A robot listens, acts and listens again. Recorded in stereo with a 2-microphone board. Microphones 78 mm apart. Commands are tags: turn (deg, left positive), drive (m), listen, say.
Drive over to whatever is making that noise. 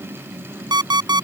<turn deg="-75"/>
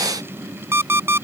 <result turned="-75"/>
<turn deg="-35"/>
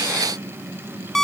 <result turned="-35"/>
<drive m="1.0"/>
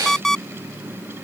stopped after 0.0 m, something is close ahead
<say>Blocked. The alarm clock is further on, straight ahead.</say>